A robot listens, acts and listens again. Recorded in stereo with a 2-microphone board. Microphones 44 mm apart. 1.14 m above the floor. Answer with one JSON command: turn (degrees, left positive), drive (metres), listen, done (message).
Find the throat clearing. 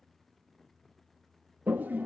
{"listen": true}
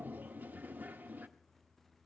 {"listen": true}
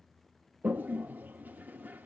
{"done": "I can't make out throat clearing, only a toilet flushing."}